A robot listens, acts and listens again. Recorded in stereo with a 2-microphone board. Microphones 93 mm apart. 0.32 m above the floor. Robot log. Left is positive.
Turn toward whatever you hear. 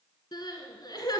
note: The crying: about 50° left or 130° left.
cmd yaw +50
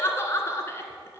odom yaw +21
note: So it is at 30° left.
cmd yaw +30
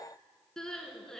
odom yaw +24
end: Found it: crying, straight ahead.